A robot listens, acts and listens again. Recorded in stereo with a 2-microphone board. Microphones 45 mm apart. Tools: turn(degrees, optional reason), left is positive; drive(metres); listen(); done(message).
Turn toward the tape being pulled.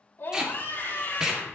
turn(degrees=-30)
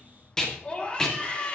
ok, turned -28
turn(degrees=15, reason="So it is at 15° left.")
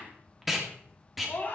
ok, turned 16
done("Facing the tape being pulled, 2 to 4 m away.")